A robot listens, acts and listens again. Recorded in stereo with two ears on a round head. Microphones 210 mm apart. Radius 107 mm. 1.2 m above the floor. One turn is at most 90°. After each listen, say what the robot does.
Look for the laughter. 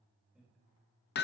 Keep listening.
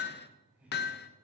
Turn 30° right.
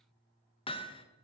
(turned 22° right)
Keep listening.
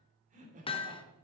Turn 90° right.
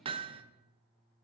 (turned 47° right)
Turn 90° right.
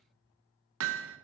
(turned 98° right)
Keep listening.
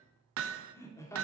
Turn 10° left.
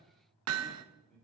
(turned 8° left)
Found it: laughter, straight ahead.